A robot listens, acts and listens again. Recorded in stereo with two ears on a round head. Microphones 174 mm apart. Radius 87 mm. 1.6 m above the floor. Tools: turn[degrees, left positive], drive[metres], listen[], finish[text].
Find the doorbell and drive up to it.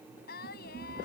Action: listen[]
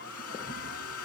Action: listen[]
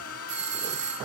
Thought: The doorbell: about 35° right or 145° right.
Action: turn[-35]
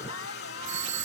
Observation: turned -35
Thought: So it is at 110° right.
Action: turn[-110]
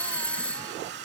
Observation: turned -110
Action: drive[1.0]
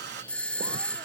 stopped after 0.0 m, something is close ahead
Action: finish[Something is in my way. I am facing the doorbell but have not reached it.]